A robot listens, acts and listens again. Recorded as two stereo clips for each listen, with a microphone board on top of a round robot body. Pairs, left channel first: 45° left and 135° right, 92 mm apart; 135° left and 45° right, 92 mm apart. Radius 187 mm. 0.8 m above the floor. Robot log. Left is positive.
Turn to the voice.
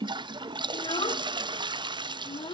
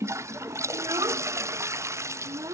note: The child speaking: 10° left.
cmd yaw +10
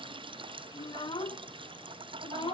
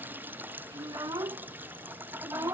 note: The child speaking is now 10° left.
cmd yaw +10
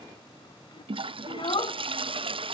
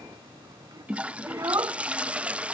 note: The child speaking is now 10° left.
cmd yaw +10
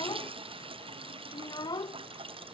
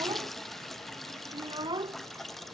end: Found it: a child speaking, straight ahead.